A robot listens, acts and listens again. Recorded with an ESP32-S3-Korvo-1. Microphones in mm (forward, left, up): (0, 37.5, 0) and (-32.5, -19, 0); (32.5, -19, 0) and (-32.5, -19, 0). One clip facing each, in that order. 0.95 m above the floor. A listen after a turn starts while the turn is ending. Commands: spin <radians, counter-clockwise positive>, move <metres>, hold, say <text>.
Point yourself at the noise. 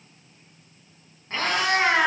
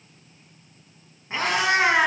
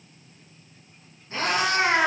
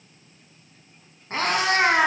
spin 2.88
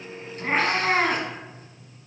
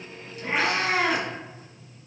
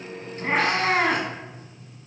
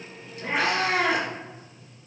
spin 0.44
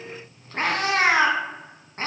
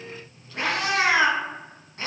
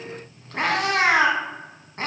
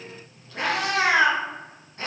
spin 0.44
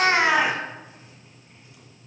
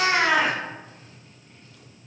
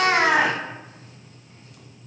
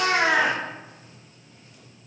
spin -0.17
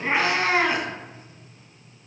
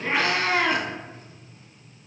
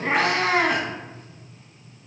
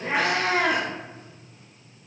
say Found it: a cat meowing, straight ahead.